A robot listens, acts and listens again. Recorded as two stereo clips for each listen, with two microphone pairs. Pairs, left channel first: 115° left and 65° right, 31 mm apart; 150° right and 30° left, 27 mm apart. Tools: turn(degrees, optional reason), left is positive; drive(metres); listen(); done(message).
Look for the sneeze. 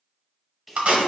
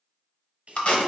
turn(degrees=15, reason="The sneeze: 15° left.")
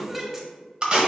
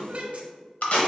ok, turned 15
done("Found it: a sneeze, straight ahead, 1 to 2 m away.")